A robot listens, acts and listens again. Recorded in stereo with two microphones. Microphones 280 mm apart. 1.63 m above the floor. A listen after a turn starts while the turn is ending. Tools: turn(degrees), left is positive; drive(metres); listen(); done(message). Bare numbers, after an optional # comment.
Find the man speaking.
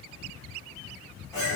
listen()
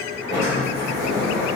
listen()
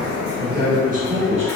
# The man speaking: about 25° right or 155° right.
turn(-25)
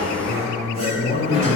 # So it is at 20° left.
turn(20)
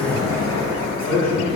# The man speaking is now 15° left.
turn(15)
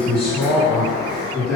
done("Found it: a man speaking, straight ahead, 2 to 4 m away.")